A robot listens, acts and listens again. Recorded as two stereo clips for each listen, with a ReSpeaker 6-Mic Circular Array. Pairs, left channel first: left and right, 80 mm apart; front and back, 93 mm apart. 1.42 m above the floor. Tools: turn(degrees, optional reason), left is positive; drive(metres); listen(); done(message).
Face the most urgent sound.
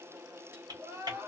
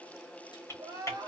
turn(degrees=-140, reason="The crying: 140° right.")
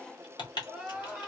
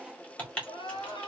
turn(degrees=-10, reason="The crying is now 10° right.")
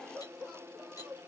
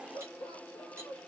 done("Found it: crying, straight ahead, 1 to 2 m away.")